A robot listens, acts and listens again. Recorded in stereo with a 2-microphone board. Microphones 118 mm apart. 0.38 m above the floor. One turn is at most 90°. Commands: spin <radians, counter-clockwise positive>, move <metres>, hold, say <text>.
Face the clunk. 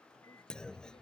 spin 0.52
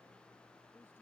hold
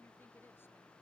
say I heard a clunk, but can't make it out now. It was about 25° right or 145° left.